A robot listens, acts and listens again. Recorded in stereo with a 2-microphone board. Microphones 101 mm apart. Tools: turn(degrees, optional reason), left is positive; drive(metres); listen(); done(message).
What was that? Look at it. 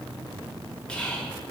turn(degrees=30)
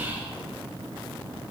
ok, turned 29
listen()
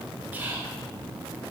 turn(degrees=-20, reason="So it is at 20° right.")
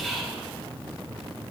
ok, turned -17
done("Found it: whispering, straight ahead.")